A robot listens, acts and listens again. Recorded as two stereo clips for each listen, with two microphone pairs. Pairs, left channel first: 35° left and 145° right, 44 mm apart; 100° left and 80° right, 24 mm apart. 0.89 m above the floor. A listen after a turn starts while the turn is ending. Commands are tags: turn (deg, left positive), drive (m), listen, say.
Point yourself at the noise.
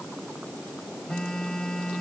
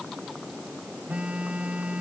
<turn deg="-40"/>
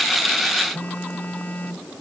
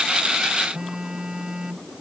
<turn deg="-15"/>
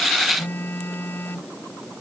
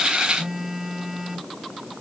<say>Facing the phone buzzing.</say>